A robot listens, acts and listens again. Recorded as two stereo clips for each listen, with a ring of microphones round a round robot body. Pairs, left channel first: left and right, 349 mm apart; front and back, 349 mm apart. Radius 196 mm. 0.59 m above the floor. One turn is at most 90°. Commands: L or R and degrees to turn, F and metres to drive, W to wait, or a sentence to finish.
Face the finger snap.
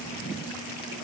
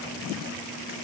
W
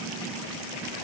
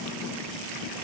W
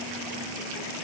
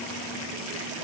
I can't make out a finger snap.